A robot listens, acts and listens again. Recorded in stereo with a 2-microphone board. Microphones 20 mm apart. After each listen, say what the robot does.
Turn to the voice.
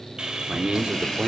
Turn 45° right.
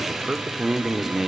Turn 20° right.
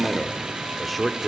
Facing the man speaking.